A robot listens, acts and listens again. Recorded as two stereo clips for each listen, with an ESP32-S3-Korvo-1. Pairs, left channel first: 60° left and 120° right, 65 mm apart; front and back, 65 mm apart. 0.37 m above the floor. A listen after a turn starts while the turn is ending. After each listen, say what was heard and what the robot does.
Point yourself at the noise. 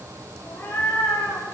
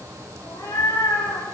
The cat meowing: 10° left. Turn 10° left.
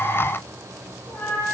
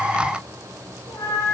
Facing the cat meowing, over 4 m away.